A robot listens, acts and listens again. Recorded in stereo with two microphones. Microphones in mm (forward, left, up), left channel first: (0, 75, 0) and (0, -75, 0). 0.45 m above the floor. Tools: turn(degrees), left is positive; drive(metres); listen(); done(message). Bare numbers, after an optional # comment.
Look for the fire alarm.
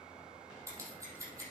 listen()
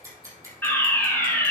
turn(30)
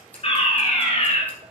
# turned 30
# So it is at 135° left.
turn(135)
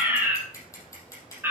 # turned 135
# The fire alarm is now 15° right.
turn(-15)
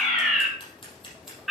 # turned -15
done("Facing the fire alarm, over 4 m away.")